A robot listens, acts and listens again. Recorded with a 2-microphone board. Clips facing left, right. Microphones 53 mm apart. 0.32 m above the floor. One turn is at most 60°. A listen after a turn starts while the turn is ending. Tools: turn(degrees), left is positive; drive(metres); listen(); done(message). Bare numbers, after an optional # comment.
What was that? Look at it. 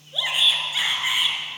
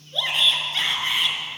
turn(30)
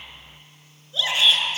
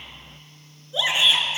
# So it is at 20° right.
turn(-20)
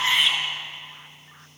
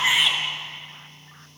done("Found it: a shout, straight ahead, over 4 m away.")